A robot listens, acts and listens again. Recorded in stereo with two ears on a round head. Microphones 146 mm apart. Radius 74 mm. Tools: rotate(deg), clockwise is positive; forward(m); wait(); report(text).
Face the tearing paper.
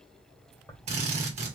rotate(-15)
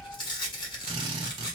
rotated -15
rotate(-150)
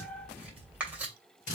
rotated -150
rotate(10)
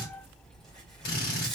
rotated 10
report("Facing the tearing paper, 2 to 4 m away.")